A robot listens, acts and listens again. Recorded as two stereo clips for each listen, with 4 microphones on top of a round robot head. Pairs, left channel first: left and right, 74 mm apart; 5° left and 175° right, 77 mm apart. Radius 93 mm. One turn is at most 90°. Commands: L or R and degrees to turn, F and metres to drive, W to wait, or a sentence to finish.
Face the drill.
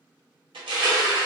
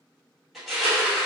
W
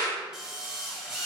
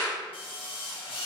R10
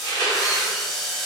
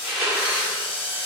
Facing the drill.